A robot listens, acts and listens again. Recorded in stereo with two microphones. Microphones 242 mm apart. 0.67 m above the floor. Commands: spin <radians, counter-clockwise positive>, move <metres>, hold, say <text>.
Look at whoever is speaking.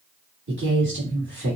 spin -0.87
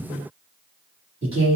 spin -0.44
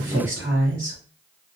spin -0.26
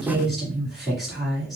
say Found it: a woman speaking, straight ahead.